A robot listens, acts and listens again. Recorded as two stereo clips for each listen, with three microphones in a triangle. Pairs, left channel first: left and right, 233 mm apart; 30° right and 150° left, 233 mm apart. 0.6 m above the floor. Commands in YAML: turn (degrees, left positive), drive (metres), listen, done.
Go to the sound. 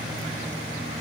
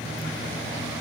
listen: true
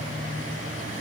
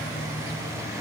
listen: true
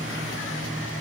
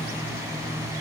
done: "I can't make out anything to turn to."